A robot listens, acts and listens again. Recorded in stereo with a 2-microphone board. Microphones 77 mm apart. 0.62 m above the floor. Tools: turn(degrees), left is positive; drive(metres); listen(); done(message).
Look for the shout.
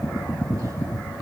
listen()
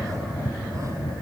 listen()
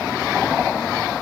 done("I can't make out a shout.")